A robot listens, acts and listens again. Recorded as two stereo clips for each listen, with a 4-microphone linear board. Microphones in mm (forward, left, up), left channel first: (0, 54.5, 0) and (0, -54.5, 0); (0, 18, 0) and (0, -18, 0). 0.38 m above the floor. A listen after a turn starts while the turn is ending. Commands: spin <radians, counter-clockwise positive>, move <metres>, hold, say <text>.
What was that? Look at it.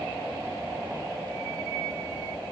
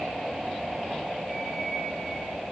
hold
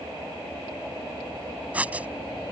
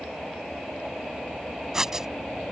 spin -0.52
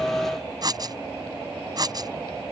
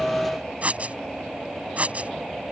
spin -2.36
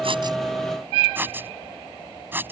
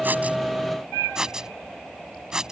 spin -0.35
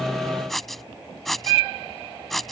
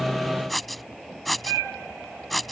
say Facing the writing.